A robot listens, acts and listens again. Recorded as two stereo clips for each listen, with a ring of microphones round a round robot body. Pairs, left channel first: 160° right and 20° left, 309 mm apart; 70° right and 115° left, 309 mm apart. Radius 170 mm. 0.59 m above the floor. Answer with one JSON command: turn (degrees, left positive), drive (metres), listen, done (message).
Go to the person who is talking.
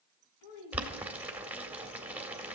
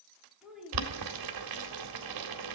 {"turn": -160}
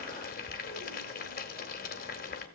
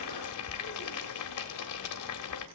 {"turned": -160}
{"listen": true}
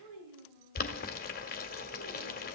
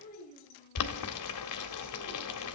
{"drive": 1.0}
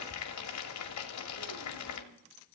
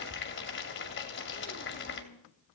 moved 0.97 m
{"listen": true}
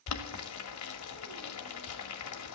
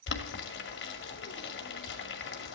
{"listen": true}
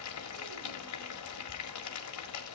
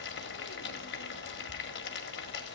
{"done": "I heard a child speaking from this way, but can't make it out now. I did not reach it."}